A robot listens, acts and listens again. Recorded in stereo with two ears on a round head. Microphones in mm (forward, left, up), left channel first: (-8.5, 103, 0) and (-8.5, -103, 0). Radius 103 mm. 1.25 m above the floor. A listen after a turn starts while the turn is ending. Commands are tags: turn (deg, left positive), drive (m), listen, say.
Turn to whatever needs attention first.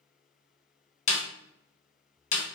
<listen/>
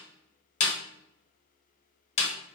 <listen/>
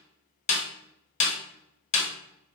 <say>I can't make out anything urgent, only a snare drum.</say>